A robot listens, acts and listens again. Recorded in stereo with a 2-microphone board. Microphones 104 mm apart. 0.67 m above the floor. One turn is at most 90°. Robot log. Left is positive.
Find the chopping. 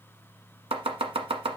note: The chopping: about 70° right or 110° right.
cmd yaw -70
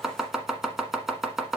end: Found it: chopping, straight ahead.